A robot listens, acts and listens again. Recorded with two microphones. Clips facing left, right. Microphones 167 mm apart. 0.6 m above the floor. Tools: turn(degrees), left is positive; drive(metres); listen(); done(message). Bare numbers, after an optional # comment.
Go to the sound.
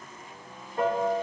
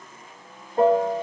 # The piano: about 35° right or 145° right.
turn(-35)
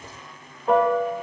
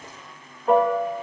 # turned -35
drive(1.0)
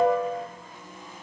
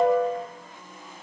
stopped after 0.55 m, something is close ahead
done("Blocked. The piano is further on, straight ahead.")